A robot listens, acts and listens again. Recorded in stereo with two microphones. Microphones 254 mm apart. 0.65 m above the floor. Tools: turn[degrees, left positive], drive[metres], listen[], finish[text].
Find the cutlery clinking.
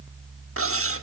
Thought: The cutlery clinking: about 60° right or 120° right.
Action: turn[-60]
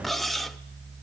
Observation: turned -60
Action: finish[Facing the cutlery clinking.]